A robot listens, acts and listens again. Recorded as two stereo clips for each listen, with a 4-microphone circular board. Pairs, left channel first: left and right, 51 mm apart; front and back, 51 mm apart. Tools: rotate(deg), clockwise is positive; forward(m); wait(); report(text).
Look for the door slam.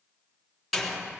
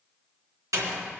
rotate(-180)
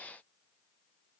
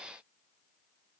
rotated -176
report("I heard a door slam from this way, but can't make it out now.")